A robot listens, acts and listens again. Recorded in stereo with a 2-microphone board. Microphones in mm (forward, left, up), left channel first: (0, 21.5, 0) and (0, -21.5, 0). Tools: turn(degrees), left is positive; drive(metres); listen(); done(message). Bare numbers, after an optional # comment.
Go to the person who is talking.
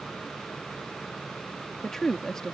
turn(30)
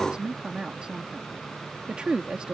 # So it is at 20° right.
turn(-20)
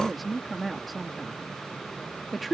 drive(1.0)
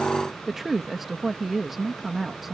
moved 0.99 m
drive(1.0)
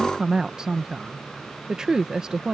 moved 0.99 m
# The woman speaking is now 15° right.
turn(-15)
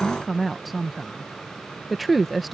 drive(1.0)
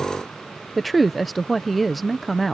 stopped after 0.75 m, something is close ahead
done("I am next to the woman speaking.")